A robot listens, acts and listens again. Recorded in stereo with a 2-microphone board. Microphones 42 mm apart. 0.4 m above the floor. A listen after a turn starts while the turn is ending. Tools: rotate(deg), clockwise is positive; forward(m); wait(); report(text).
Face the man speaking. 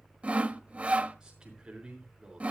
rotate(20)
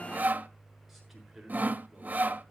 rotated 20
report("Facing the man speaking.")